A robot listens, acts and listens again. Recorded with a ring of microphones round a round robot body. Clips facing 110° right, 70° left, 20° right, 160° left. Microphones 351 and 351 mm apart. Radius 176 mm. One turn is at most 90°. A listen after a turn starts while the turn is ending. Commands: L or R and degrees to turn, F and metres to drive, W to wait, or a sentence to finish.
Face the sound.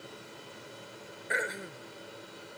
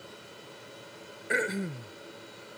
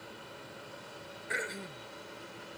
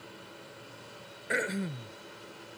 L90
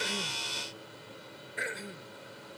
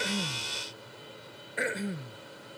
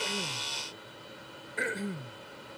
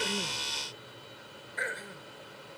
L30
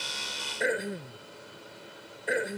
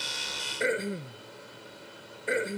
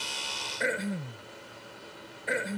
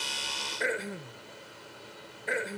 R15
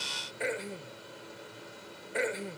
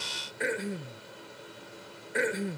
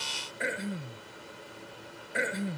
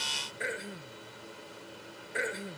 Found it: throat clearing, straight ahead.